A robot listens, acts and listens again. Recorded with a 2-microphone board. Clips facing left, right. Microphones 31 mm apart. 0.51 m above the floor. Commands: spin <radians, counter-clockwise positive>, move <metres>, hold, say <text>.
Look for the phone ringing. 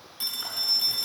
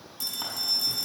spin 0.52
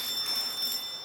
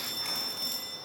say Facing the phone ringing, 2 to 4 m away.